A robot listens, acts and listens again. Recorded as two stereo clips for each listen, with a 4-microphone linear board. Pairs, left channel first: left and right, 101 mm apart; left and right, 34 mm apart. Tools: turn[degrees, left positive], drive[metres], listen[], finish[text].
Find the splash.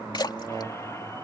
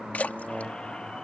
Thought: The splash: about 45° left or 135° left.
Action: turn[45]
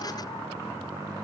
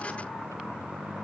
Action: listen[]
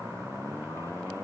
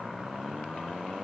Action: finish[I heard a splash, but can't make it out now. It was about straight ahead or 90° left.]